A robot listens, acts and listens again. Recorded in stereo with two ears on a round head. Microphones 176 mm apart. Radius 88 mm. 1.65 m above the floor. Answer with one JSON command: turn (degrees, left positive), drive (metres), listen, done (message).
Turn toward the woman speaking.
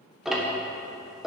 {"listen": true}
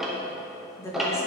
{"turn": 15}
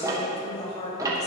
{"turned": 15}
{"turn": 35}
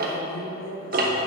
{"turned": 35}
{"turn": 110}
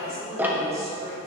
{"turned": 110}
{"turn": -15}
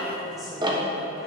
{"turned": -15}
{"done": "Facing the woman speaking, 2 to 4 m away."}